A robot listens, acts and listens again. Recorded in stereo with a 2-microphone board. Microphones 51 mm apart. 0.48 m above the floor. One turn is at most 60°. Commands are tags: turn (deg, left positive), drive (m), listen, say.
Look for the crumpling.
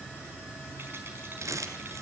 <turn deg="-60"/>
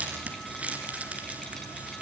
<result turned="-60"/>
<turn deg="-25"/>
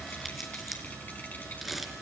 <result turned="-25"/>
<say>Found it: crumpling, straight ahead, 2 to 4 m away.</say>